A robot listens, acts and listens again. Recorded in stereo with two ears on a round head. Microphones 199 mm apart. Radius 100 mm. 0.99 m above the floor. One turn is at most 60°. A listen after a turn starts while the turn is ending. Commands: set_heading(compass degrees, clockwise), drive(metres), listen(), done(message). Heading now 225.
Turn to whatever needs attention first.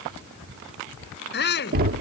set_heading(175)
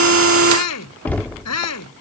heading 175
set_heading(115)
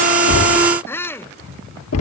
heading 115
set_heading(105)
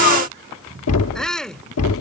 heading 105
done("Facing the shout.")